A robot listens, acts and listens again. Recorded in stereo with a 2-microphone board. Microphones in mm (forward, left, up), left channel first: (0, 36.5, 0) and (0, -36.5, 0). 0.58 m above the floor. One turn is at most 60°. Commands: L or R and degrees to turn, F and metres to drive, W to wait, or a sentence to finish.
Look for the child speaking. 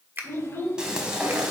L40
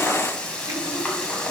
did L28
W
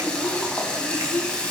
L50
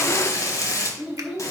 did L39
R15
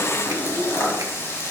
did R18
W
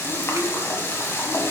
W
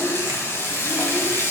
I heard a child speaking from this way, but can't make it out now.